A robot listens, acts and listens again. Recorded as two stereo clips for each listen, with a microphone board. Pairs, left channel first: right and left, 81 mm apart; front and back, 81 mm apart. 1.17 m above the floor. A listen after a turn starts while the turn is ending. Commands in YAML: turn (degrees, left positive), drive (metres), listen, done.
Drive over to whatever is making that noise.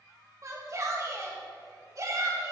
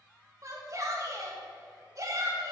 turn: 135
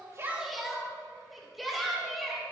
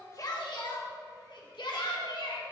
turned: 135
drive: 1.0
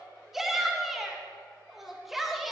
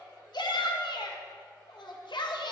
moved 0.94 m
drive: 1.0
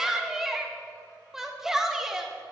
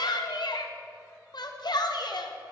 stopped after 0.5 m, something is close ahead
turn: 10
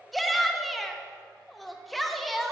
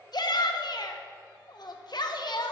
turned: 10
done: "Arrived at the shout, straight ahead."